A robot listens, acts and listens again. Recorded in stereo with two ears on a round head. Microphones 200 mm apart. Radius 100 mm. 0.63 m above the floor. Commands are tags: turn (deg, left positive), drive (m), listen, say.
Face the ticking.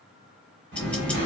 <turn deg="30"/>
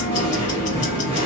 <turn deg="145"/>
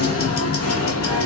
<turn deg="45"/>
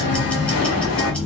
<say>Facing the ticking.</say>